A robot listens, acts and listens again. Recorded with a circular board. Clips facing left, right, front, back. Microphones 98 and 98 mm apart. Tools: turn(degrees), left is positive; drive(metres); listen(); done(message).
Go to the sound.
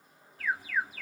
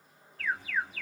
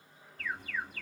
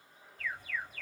turn(degrees=10)
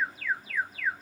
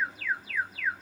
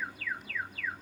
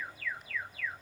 drive(metres=1.0)
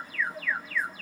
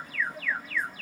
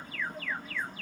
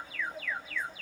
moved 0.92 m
drive(metres=1.0)
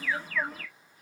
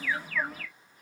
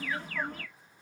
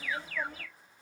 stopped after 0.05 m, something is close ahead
done("Arrived at the alarm, straight ahead.")